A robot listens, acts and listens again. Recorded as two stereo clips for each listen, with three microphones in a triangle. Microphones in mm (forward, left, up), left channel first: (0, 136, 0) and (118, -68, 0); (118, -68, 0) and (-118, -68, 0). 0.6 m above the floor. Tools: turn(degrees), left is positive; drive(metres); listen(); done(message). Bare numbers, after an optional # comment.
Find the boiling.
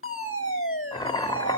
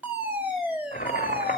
# The boiling: 50° left.
turn(50)
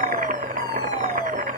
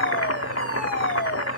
done("Found it: boiling, straight ahead, under 1 m away.")